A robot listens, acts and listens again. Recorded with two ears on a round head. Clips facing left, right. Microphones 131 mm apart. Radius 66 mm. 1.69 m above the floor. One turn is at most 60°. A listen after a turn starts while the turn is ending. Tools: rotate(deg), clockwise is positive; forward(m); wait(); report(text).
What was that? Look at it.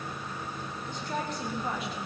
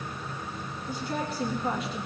rotate(-30)
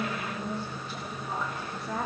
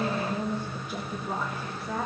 rotate(-30)
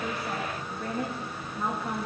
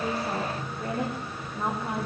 rotate(30)
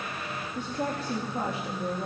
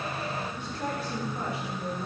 rotate(-35)
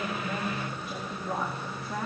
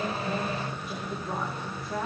report("Facing the woman speaking.")